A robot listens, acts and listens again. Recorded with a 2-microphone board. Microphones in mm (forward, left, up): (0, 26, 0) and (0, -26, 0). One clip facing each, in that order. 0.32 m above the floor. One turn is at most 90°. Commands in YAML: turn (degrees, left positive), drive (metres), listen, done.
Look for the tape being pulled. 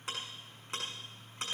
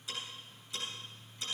listen: true
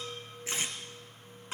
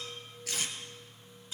turn: 25
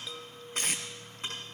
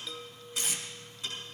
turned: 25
turn: 90
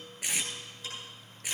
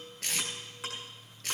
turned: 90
turn: 15
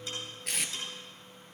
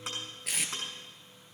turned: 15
done: "Found it: tape being pulled, straight ahead."